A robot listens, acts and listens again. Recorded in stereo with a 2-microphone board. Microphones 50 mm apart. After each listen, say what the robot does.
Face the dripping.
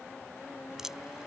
Turn 30° right.
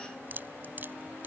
Turn 140° right.
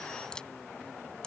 Turn 15° left.
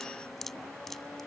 Found it: dripping, straight ahead.